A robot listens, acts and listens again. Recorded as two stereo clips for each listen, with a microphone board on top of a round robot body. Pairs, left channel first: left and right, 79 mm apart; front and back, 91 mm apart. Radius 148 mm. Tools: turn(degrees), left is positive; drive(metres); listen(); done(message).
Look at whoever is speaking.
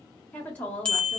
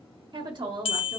turn(degrees=155)
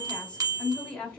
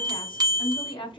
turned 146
turn(degrees=10)
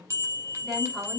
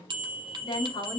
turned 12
done("Found it: a woman speaking, straight ahead.")